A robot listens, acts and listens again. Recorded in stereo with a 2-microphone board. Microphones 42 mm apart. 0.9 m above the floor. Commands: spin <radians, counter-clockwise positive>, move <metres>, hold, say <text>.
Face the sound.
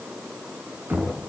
spin -0.87
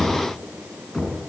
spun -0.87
say Found it: knocking, straight ahead, over 4 m away.